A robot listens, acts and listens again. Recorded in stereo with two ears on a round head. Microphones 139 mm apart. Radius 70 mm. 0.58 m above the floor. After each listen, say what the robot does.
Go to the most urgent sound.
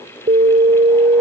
Turn 50° right.
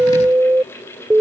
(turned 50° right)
Turn 15° right.
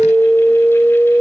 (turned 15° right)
Drive 1.0 m forward.
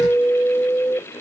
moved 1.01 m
Turn 10° left.
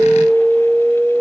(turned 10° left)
Drive 1.0 m forward.
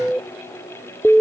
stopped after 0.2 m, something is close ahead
I am next to the alarm.